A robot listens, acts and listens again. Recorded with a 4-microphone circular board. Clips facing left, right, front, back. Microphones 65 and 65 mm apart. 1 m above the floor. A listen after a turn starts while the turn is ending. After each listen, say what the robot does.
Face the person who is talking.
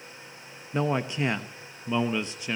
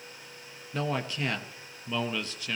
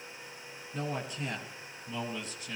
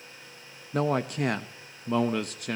Turn 155° left.
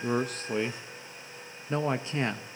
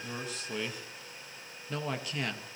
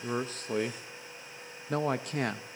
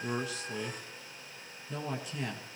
Turn 25° left.
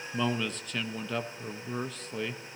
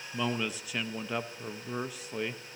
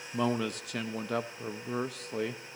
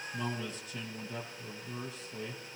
Turn 10° right.
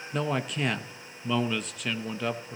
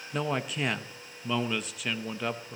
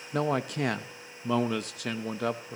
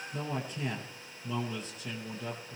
Facing the man speaking.